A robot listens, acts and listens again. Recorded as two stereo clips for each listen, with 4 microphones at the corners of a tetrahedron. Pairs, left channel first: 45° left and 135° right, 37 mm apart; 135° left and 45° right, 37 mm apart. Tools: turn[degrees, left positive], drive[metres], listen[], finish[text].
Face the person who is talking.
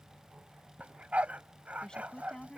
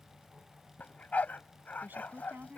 Thought: The woman speaking: 20° right.
Action: turn[-20]
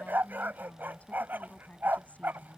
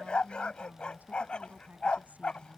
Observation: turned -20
Action: finish[Found it: a woman speaking, straight ahead.]